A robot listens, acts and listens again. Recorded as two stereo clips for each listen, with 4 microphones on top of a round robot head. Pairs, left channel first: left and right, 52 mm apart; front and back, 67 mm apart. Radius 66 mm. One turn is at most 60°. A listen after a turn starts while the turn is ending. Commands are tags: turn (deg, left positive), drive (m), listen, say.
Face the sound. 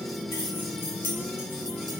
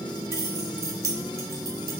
<turn deg="60"/>
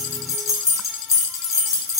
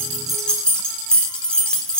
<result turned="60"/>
<turn deg="60"/>
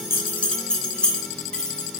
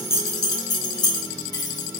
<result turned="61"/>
<turn deg="15"/>
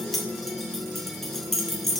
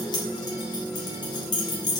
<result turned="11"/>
<say>Facing the keys jangling.</say>